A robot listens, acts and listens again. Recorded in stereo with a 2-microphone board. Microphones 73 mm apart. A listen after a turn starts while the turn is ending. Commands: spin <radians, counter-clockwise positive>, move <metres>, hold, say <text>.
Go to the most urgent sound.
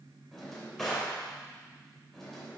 hold
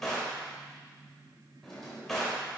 hold
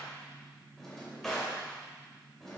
say I can't make out anything urgent to turn to.